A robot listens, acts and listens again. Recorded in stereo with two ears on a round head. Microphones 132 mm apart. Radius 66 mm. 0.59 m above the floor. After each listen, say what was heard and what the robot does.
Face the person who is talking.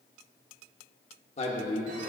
The man speaking: about 45° left or 135° left. Turn 45° left.
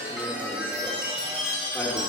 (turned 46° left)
Keep listening.
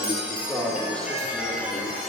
Found it: a man speaking, straight ahead, 1 to 2 m away.